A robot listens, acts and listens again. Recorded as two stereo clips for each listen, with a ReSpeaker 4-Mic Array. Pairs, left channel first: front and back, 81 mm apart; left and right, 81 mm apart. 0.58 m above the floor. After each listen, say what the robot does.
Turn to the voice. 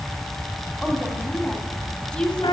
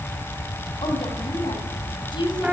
Turn 80° left.
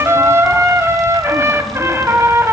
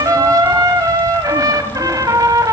Keep listening.
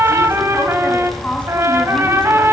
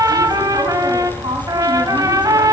Turn 75° right.
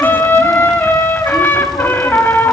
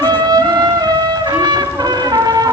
Keep listening.
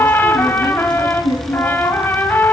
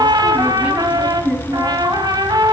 Turn 15° right.
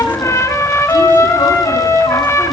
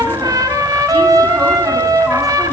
Keep listening.
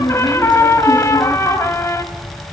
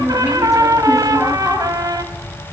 Facing the woman speaking, 2 to 4 m away.